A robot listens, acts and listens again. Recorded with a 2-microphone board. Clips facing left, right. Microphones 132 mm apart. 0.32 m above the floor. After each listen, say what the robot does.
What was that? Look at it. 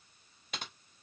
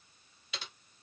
Turn 50° left.
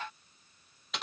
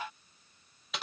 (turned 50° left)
Found it: typing on a keyboard, straight ahead, under 1 m away.